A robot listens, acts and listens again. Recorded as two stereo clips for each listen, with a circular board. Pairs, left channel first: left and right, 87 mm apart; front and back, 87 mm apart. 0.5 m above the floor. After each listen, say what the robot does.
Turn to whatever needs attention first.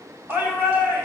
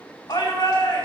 Turn 25° right.
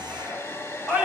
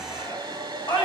Turn 10° right.
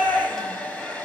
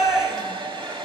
Found it: a shout, straight ahead.